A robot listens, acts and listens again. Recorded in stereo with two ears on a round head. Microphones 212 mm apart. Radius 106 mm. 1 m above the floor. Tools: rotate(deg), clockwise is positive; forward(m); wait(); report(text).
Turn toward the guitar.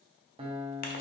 rotate(25)
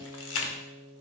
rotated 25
report("Facing the guitar, 1 to 2 m away.")